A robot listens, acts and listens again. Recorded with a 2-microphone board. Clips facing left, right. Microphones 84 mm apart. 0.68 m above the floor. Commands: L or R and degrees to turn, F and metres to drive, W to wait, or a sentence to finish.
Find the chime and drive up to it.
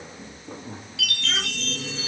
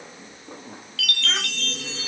L15
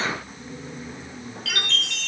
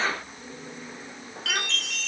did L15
F1.0
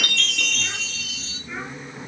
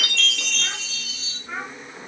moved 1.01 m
F1.0
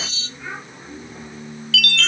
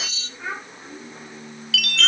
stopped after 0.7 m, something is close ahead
I am next to the chime.